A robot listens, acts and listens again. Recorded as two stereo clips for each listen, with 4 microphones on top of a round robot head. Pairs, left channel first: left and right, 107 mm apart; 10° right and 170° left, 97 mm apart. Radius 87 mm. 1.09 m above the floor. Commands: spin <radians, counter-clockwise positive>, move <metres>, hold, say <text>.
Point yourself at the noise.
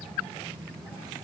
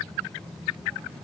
hold
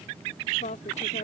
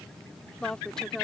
spin 1.22
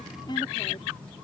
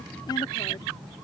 hold
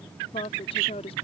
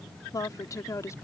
spin 0.87
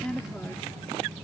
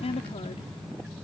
say Facing the woman speaking.